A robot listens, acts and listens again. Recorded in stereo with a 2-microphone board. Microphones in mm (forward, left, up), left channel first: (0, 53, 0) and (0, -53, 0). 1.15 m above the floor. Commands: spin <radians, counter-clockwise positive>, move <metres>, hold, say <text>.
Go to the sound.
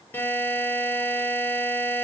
spin 0.26
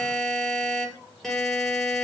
move 1.0
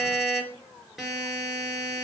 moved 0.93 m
move 1.0
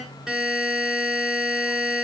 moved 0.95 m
move 1.0
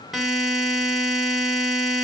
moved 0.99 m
move 1.0
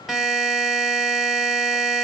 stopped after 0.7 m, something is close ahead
say Arrived at the buzzer, straight ahead.